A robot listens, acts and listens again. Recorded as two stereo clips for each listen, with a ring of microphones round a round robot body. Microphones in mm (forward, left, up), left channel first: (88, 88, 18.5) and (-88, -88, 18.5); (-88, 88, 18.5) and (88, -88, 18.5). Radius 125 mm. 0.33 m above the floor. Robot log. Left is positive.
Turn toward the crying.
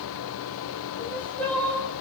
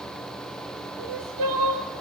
note: The crying: 40° right.
cmd yaw -40
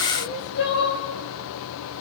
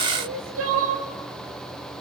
end: Found it: crying, straight ahead.